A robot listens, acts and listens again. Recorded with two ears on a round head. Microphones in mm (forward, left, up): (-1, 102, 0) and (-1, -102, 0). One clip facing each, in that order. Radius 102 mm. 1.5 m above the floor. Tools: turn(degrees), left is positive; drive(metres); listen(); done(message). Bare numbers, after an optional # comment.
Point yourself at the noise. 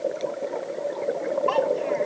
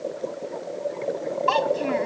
# The child speaking: about 55° right or 125° right.
turn(-55)
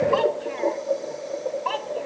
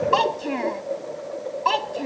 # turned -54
# So it is at 60° right.
turn(-60)
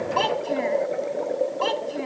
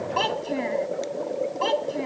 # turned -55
done("Facing the child speaking.")